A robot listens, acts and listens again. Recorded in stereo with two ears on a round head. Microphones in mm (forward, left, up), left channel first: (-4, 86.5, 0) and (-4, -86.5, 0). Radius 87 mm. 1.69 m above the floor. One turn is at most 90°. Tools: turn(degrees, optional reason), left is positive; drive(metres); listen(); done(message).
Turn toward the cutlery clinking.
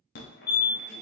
listen()
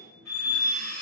turn(degrees=15, reason="The cutlery clinking: about 15° left or 165° left.")
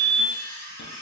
turn(degrees=90, reason="So it is at 150° left.")
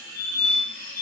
turn(degrees=65, reason="The cutlery clinking is now 65° left.")
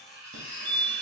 turn(degrees=-15, reason="The cutlery clinking is now 15° right.")
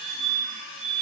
done("Found it: cutlery clinking, straight ahead, 1 to 2 m away.")